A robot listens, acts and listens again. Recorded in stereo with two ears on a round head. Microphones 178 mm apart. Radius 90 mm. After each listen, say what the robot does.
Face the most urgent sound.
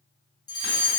Turn 20° left.
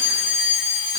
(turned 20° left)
Turn 140° left.
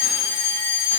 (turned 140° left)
Turn 50° left.
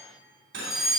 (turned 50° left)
Found it: a fire alarm, straight ahead.